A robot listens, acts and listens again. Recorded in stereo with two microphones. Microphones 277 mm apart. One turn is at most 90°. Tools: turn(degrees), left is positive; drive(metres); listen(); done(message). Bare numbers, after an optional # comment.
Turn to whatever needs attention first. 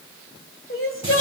# The crying: about 50° left or 130° left.
turn(50)
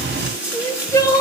# So it is at 15° left.
turn(15)
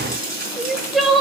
done("Found it: crying, straight ahead.")